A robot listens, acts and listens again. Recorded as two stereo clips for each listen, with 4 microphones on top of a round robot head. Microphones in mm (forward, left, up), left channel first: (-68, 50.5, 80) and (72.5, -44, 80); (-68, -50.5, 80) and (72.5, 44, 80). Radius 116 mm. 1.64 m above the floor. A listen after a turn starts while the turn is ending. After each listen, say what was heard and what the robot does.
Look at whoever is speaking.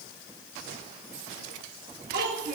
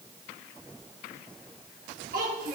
Found it: a child speaking, straight ahead.